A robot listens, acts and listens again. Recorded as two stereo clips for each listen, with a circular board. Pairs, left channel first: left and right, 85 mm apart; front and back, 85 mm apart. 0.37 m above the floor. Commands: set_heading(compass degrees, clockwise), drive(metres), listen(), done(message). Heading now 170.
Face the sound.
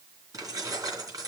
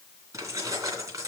set_heading(300)
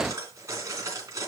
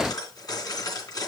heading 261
set_heading(301)
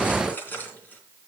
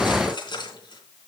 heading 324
set_heading(299)
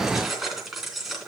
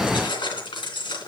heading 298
done("Facing the keys jangling.")